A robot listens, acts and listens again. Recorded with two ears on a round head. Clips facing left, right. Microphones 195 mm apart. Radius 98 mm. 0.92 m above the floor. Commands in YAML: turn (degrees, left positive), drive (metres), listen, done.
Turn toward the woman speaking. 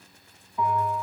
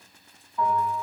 listen: true
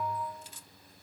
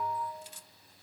listen: true
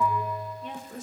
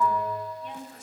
turn: 60
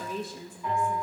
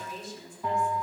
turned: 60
turn: 45
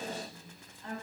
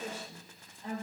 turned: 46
turn: -20
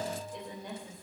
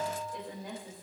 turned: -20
done: "Found it: a woman speaking, straight ahead."